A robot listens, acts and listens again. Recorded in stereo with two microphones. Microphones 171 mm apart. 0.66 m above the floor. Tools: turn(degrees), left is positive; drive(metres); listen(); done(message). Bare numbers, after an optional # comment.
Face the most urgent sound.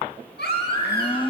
turn(90)
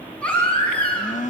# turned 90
done("Facing the baby crying, 2 to 4 m away.")